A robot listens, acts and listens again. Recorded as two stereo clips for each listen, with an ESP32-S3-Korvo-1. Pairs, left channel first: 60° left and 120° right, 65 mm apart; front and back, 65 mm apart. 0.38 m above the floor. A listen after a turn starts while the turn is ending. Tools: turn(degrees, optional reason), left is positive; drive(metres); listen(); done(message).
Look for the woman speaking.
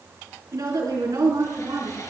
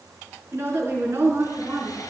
turn(degrees=-125, reason="The woman speaking: 125° right.")
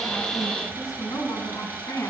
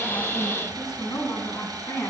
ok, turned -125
turn(degrees=40, reason="The woman speaking is now 40° left.")
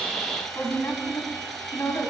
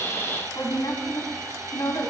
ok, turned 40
turn(degrees=20, reason="The woman speaking is now 20° left.")
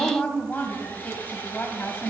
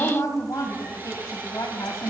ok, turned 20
done("Facing the woman speaking.")